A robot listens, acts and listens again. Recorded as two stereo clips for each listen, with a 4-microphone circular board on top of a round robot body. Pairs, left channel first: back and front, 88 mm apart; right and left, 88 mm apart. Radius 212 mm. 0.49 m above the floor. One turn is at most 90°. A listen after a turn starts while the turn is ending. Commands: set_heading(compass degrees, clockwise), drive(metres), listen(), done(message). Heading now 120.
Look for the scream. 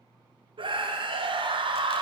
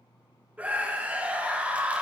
set_heading(105)
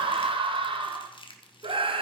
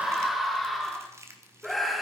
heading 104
done("Found it: a scream, straight ahead, 1 to 2 m away.")